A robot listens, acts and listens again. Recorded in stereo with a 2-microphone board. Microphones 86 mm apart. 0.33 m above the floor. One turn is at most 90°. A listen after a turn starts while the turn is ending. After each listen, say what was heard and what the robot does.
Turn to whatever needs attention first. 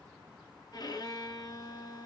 Keep listening.
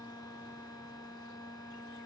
Keep listening.
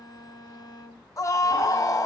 The scream: about 40° left or 140° left. Turn 40° left.
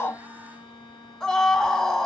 So it is at 10° left. Turn 10° left.
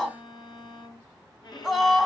Found it: a scream, straight ahead, 2 to 4 m away.